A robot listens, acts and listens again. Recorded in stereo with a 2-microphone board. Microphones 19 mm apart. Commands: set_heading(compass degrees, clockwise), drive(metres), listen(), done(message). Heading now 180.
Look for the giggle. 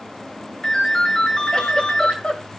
set_heading(90)
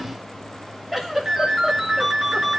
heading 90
set_heading(105)
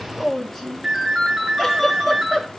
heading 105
done("Facing the giggle, 2 to 4 m away.")